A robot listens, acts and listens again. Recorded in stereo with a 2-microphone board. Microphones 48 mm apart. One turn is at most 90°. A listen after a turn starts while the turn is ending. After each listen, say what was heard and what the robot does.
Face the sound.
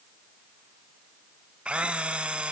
The camera shutter: about 25° right or 155° right. Turn 25° right.
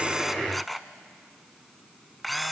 Facing the camera shutter.